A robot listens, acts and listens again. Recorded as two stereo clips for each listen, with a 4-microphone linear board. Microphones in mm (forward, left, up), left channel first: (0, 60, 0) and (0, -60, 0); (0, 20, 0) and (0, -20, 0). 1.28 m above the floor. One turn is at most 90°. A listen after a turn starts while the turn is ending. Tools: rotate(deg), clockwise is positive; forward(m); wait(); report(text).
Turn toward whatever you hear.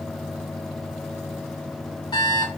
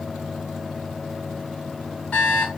rotate(-35)
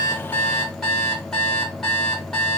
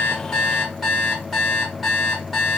report("Facing the alarm clock.")